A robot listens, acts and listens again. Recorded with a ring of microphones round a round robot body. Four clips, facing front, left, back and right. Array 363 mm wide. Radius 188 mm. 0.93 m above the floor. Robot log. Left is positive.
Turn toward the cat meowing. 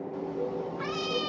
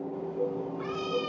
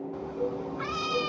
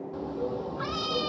note: The cat meowing: 105° right.
cmd yaw -105
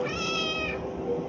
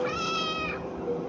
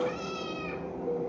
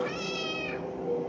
note: The cat meowing is now 20° left.
cmd yaw +20
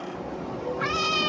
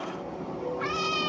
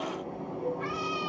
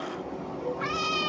end: Facing the cat meowing.